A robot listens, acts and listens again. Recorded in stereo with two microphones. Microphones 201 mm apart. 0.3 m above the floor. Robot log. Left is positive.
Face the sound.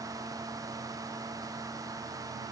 cmd idle
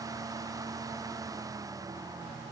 cmd idle
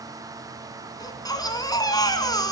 note: The baby crying: about 20° left or 160° left.
cmd yaw +20
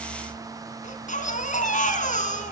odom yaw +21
note: So it is at 140° left.
cmd yaw +140
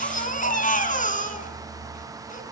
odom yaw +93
note: The baby crying is now 45° left.
cmd yaw +45
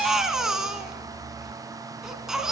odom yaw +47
end: Facing the baby crying, 2 to 4 m away.